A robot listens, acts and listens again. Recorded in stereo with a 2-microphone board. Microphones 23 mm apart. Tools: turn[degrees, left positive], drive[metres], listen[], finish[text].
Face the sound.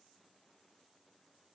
Action: listen[]
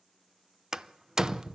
Thought: The door slam: about 25° right or 155° right.
Action: turn[-25]
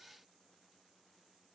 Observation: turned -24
Action: listen[]
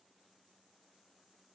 Action: finish[I heard a door slam, but can't make it out now. It was about straight ahead or 130° right.]